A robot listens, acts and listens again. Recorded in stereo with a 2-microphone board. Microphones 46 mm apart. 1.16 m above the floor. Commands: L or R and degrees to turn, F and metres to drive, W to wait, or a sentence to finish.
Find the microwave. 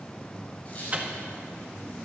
R30
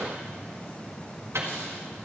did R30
R120
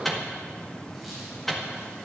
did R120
Found it: a microwave, straight ahead, 1 to 2 m away.